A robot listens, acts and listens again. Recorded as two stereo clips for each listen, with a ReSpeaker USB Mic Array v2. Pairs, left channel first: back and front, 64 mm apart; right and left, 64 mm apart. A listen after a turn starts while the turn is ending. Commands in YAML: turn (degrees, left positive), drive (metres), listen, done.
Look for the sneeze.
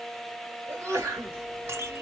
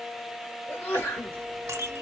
turn: -40
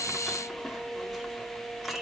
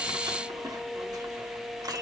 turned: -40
done: "I heard a sneeze from this way, but can't make it out now."